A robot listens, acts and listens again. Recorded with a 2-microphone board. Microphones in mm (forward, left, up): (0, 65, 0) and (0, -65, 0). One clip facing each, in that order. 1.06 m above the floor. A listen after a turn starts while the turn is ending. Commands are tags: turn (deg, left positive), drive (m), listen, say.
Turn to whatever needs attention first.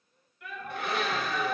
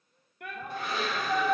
<turn deg="-60"/>
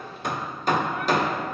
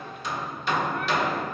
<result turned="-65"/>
<listen/>
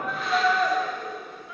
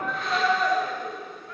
<say>Facing the shout.</say>